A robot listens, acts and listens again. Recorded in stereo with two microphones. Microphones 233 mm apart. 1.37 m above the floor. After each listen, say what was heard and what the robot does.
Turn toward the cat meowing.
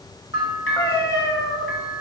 The cat meowing: about 25° left or 155° left. Turn 25° left.
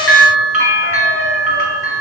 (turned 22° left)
Keep listening.
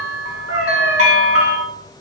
So it is at 110° left. Turn 110° left.
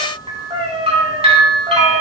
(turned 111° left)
The cat meowing is now 25° right. Turn 25° right.
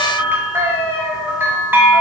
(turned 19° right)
The cat meowing is now 10° right. Turn 10° right.
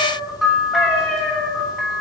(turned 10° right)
Facing the cat meowing, 2 to 4 m away.